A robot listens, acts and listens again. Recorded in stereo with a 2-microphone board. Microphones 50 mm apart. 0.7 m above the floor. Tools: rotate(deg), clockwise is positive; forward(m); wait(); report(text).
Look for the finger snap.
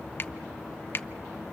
rotate(-45)
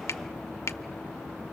rotate(-80)
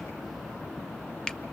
wait()
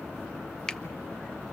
rotate(-15)
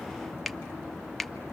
report("Facing the finger snap, under 1 m away.")